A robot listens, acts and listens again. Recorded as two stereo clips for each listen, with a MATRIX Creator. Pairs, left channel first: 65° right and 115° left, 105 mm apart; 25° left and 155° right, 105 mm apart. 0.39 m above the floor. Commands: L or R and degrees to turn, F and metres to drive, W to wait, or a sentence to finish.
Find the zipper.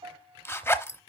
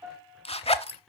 Found it: a zipper, straight ahead.